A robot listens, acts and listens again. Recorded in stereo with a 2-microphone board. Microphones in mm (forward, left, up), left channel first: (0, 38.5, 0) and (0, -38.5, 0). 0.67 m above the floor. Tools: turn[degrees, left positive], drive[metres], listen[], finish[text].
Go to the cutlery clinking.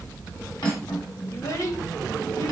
Action: turn[90]
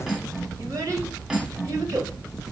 Thought: So it is at 10° right.
Action: turn[-10]
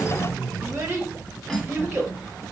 Action: drive[1.0]
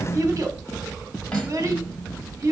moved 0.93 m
Thought: The cutlery clinking is now 10° left.
Action: turn[10]
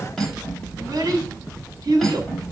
Action: drive[1.0]
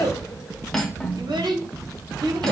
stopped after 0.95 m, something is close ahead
Action: finish[Arrived at the cutlery clinking, straight ahead.]